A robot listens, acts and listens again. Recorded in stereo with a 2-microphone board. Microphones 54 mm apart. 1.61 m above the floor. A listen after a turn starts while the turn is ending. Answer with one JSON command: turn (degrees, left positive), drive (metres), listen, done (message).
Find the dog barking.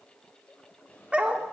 {"turn": -25}
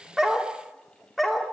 {"done": "Facing the dog barking, 1 to 2 m away."}